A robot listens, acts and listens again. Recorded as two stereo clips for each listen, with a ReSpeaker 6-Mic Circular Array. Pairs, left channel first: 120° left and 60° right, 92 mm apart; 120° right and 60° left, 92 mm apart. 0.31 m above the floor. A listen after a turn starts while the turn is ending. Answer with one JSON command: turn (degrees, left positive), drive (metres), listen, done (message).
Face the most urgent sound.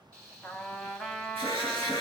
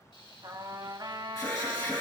{"turn": -70}
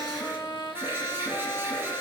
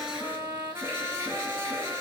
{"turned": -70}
{"done": "Facing the alarm."}